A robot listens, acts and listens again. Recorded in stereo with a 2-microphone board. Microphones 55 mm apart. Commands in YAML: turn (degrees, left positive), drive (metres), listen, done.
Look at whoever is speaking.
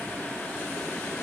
listen: true
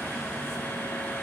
listen: true
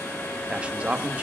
turn: -25
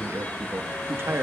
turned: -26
turn: -130
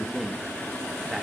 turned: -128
done: "Found it: a man speaking, straight ahead, 1 to 2 m away."